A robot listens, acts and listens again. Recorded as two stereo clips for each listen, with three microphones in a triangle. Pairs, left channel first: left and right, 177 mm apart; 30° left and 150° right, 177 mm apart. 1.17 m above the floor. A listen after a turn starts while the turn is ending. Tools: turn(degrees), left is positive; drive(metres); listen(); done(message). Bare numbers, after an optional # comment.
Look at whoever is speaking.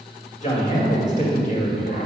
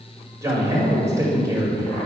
# The man speaking: 140° left.
turn(140)
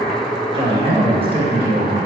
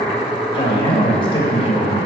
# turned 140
# The man speaking is now 35° right.
turn(-35)
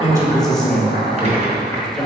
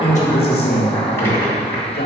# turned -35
done("Facing the man speaking.")